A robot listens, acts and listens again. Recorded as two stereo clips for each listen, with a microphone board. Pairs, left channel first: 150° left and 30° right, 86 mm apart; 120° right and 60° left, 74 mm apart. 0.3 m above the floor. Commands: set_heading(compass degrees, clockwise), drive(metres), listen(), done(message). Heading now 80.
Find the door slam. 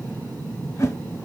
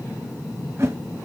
listen()
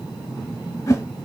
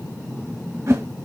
listen()
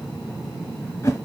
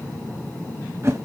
done("I can't make out a door slam, only a whoosh.")